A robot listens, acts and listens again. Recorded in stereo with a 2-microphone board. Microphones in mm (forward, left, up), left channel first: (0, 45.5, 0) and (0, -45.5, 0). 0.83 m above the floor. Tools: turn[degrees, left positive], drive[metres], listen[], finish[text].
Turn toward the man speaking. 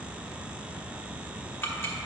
Action: listen[]
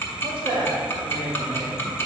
Thought: The man speaking: about 65° right or 115° right.
Action: turn[-65]
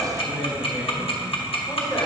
Thought: So it is at 35° left.
Action: turn[35]
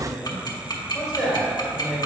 Action: finish[Found it: a man speaking, straight ahead, 2 to 4 m away.]